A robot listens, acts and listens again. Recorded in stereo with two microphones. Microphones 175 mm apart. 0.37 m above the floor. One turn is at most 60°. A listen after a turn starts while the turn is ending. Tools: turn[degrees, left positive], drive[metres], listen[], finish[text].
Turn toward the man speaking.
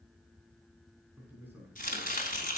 Action: turn[-30]
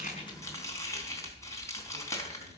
Action: listen[]
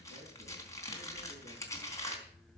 Action: listen[]
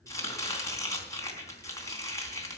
Action: finish[I heard a man speaking, but can't make it out now. It was about 20° left or 140° right.]